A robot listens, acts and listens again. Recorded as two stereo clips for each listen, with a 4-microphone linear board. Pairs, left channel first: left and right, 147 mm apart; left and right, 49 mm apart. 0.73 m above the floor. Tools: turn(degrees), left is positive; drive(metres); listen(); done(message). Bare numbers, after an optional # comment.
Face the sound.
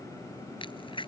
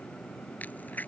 # The crack: about 35° left or 145° left.
turn(35)
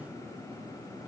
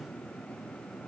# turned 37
listen()
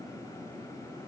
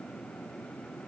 done("I heard a crack, but can't make it out now. It was about 5° right or 110° left.")